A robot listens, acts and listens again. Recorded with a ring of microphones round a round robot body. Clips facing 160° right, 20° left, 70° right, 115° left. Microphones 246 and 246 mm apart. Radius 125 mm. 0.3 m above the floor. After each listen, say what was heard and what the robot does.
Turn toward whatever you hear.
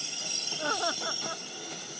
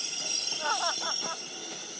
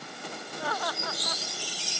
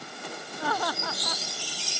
The laughter: 135° left. Turn 135° left.
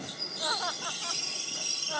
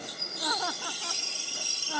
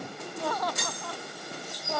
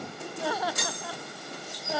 The laughter is now 30° left. Turn 30° left.
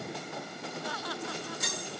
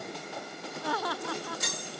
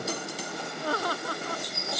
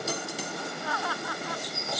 The laughter is now 15° right. Turn 15° right.
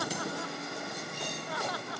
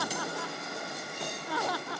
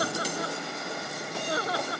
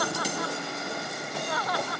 Found it: laughter, straight ahead.